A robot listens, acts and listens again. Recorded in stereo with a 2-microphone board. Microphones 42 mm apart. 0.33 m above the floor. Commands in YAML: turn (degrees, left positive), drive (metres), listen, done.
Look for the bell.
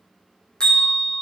turn: 20
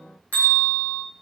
turn: 140
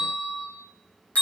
turn: 35
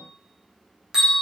turn: -15
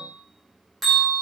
done: "Facing the bell, 2 to 4 m away."